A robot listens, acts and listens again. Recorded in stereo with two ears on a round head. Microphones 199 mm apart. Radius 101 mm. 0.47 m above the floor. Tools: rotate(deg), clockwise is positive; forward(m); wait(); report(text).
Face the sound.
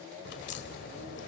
rotate(-50)
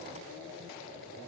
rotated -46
wait()
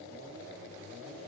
report("I heard a crack, but can't make it out now. It was about 5° left or 85° left.")